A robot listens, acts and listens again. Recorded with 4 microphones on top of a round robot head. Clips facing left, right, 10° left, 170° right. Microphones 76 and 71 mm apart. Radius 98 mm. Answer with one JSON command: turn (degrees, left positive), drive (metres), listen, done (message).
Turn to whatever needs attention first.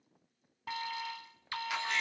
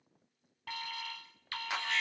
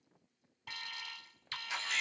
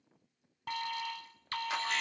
{"turn": 160}
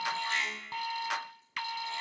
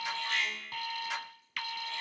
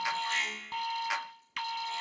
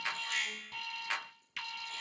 {"turn": 30}
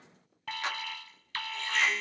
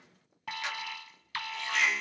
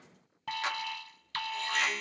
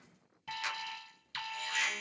{"turn": -10}
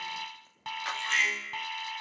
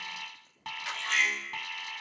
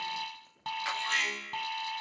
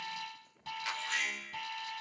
{"done": "Found it: an alarm, straight ahead."}